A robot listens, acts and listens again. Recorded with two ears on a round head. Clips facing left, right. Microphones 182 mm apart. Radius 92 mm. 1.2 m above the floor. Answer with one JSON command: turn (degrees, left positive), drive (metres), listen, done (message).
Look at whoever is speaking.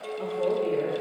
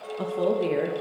{"turn": -90}
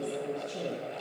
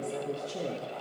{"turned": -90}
{"done": "Found it: a woman speaking, straight ahead."}